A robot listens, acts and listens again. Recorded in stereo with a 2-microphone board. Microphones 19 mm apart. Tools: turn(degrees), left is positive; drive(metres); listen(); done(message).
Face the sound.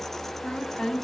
turn(degrees=55)
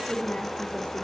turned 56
turn(degrees=55)
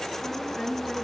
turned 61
done("Facing the woman speaking.")